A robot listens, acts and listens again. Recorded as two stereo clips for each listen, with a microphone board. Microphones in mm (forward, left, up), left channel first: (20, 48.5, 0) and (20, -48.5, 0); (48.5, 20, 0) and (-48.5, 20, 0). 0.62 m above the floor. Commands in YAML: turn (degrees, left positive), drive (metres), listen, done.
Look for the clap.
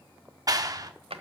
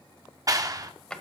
turn: -135
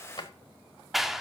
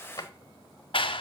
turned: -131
done: "Facing the clap, under 1 m away."